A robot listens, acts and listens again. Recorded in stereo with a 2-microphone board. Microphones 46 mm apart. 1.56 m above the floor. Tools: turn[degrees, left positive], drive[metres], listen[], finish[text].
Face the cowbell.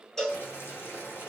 Action: turn[30]
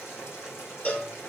Thought: So it is at 140° left.
Action: turn[140]
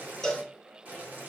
Thought: The cowbell is now 10° left.
Action: turn[10]
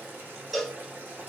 Action: finish[Facing the cowbell.]